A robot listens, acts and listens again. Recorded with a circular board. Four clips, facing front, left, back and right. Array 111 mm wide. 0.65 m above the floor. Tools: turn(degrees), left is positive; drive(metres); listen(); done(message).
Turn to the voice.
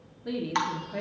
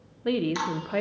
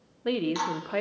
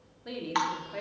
turn(degrees=135)
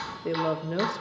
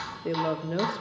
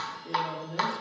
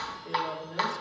turn(degrees=45)
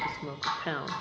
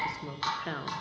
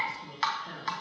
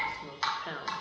turn(degrees=10)
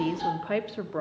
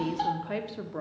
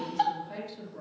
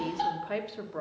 done("Facing the woman speaking, 1 to 2 m away.")